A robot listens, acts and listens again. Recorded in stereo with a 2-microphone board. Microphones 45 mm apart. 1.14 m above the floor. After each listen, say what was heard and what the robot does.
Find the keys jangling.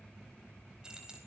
The keys jangling: about 15° right or 165° right. Turn 15° right.
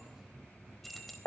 Turn 30° left.
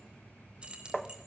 So it is at 20° right. Turn 20° right.
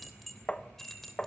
Found it: keys jangling, straight ahead, 2 to 4 m away.